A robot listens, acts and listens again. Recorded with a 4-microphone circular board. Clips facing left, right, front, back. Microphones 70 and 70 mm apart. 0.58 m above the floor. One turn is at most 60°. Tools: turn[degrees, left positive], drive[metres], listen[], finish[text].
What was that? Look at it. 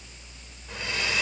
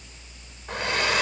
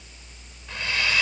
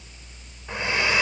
Thought: The hair dryer: 115° right.
Action: turn[-60]
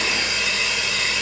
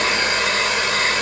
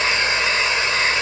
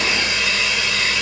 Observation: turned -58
Thought: The hair dryer is now 55° right.
Action: turn[-55]
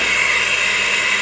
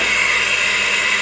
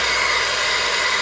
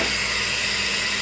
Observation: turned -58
Action: finish[Found it: a hair dryer, straight ahead.]